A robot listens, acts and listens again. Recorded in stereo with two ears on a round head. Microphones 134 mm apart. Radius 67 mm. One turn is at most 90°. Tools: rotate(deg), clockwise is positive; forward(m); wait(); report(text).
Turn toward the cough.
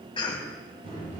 rotate(-35)
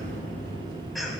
wait()
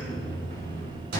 wait()
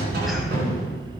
report("I heard a cough, but can't make it out now. It was about straight ahead or 110° left.")